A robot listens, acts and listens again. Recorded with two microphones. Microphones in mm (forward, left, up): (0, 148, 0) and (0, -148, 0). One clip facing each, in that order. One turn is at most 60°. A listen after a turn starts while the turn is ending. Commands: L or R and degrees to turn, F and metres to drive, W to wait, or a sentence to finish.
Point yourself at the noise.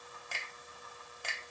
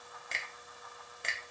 R25
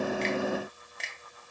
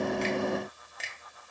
Found it: a finger snap, straight ahead, under 1 m away.